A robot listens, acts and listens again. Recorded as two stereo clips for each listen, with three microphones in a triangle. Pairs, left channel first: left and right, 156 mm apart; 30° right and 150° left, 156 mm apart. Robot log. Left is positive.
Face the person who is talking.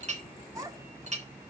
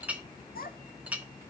note: The child speaking: 20° right.
cmd yaw -20
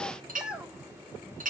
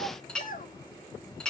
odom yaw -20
end: Found it: a child speaking, straight ahead.